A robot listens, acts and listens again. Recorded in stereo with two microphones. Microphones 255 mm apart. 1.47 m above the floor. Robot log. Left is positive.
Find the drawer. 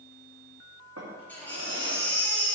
note: The drawer: about 75° right or 105° right.
cmd yaw -75
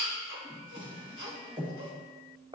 note: So it is at 20° right.
cmd yaw -20
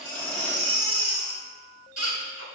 cmd idle
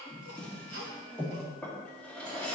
end: Facing the drawer.